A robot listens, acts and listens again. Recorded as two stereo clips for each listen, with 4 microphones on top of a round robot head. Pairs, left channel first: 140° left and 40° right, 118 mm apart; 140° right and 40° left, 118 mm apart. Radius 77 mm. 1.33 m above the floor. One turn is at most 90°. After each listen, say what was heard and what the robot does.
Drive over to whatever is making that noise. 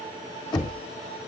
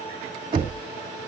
The knocking: 90° left. Turn 90° left.
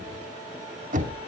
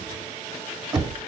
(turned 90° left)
The knocking is now 15° right. Turn 15° right.
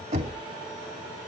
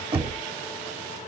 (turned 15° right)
Drive 1.0 m forward.
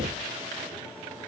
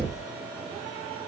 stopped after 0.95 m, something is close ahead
The knocking is now 15° right. Turn 15° right.
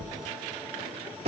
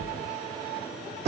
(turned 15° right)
Arrived at the knocking, straight ahead.